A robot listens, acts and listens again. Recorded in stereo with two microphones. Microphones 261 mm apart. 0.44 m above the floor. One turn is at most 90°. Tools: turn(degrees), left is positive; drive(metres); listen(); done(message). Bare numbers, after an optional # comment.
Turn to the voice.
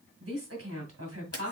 # The woman speaking: about 65° right or 115° right.
turn(-65)
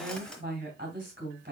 # So it is at 40° right.
turn(-40)
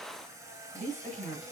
# The woman speaking is now 25° right.
turn(-25)
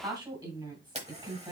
# The woman speaking is now 10° right.
turn(-10)
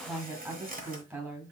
done("Facing the woman speaking.")